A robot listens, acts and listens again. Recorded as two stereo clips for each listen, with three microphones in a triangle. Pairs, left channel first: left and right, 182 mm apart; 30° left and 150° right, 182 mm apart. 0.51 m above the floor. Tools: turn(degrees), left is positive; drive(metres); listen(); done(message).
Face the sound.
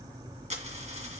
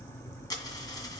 turn(degrees=-40)
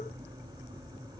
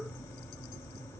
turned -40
done("Facing where the dropped coin came from. I can't hear it now.")